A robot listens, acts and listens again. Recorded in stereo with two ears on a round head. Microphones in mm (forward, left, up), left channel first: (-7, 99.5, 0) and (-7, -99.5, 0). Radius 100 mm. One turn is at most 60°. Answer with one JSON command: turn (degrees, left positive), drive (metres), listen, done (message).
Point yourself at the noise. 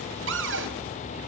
{"turn": -60}
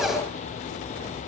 {"listen": true}
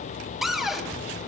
{"done": "Facing the cupboard door."}